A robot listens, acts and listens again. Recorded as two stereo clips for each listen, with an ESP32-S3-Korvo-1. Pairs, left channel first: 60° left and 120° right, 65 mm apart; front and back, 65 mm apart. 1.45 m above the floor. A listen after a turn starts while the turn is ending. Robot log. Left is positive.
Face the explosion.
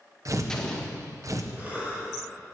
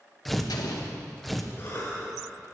note: The explosion: 20° right.
cmd yaw -20
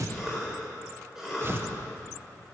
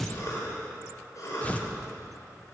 end: I heard an explosion from this way, but can't make it out now.